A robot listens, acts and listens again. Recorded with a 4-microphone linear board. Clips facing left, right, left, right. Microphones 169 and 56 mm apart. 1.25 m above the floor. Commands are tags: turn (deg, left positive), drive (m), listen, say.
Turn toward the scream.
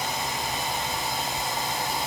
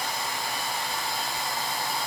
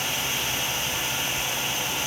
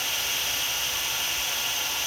<listen/>
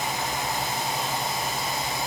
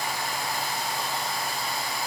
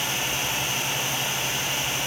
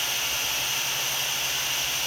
<listen/>
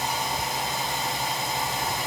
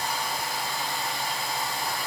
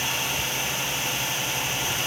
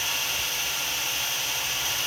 <say>I can't make out a scream.</say>